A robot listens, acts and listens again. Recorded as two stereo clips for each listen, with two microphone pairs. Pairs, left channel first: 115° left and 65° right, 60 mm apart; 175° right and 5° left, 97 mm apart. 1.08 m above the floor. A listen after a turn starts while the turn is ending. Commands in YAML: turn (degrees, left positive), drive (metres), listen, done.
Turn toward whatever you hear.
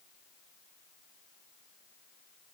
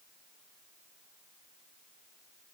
listen: true
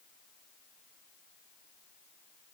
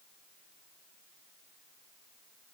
listen: true
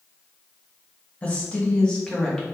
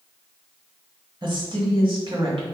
turn: 30
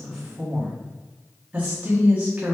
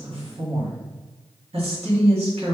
done: "Facing the woman speaking, 1 to 2 m away."